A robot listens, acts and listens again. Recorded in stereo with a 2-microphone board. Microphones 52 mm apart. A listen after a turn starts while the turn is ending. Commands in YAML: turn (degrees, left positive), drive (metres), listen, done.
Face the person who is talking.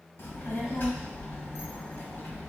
turn: 50
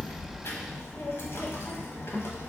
turn: 75
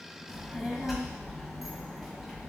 done: "Found it: a child speaking, straight ahead."